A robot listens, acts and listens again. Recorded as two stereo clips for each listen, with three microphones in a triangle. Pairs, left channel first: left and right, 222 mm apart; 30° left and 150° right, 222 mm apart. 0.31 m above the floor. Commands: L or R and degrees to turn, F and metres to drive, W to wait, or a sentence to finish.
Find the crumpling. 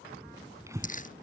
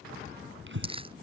L145
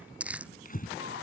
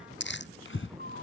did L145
Found it: crumpling, straight ahead.